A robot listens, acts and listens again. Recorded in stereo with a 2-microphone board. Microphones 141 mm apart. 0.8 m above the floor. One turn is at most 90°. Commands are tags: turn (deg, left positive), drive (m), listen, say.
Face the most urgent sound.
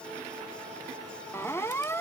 <turn deg="20"/>
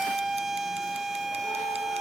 <say>Found it: a siren, straight ahead.</say>